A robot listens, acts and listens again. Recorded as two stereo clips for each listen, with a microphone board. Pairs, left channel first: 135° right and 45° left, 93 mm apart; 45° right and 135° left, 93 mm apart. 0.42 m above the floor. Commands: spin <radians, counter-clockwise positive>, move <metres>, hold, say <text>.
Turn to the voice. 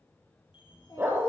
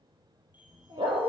spin 3.14
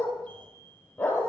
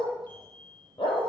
hold
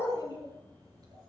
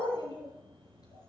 say Facing the child speaking, over 4 m away.